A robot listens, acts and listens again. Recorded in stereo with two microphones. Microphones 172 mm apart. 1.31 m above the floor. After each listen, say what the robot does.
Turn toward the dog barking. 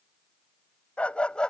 Turn 30° left.
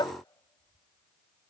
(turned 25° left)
Turn 155° left.
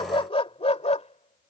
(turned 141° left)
Turn 40° left.
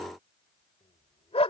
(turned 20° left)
Turn 35° left.
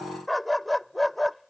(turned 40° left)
Found it: a dog barking, straight ahead.